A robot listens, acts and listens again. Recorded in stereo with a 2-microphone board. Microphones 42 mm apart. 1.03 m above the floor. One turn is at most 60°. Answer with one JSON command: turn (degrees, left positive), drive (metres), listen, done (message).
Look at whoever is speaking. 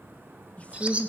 {"turn": 30}
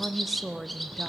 {"done": "Found it: a woman speaking, straight ahead."}